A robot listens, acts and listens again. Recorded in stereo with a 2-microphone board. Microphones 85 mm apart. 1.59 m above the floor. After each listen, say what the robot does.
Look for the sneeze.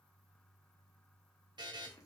Keep listening.
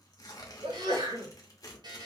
Turn 70° right.
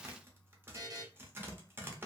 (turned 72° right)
Keep listening.
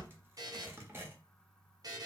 I heard a sneeze, but can't make it out now. It was about 5° left or 40° right.